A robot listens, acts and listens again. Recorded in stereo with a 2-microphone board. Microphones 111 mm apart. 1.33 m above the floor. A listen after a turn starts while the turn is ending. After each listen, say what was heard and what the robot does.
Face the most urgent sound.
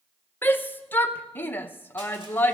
The shout: about 20° left or 160° left. Turn 20° left.
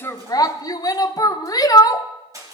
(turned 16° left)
So it is at 145° left. Turn 145° left.
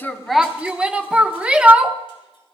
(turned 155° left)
The shout is now 10° right. Turn 10° right.
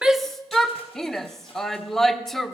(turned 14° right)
Facing the shout, under 1 m away.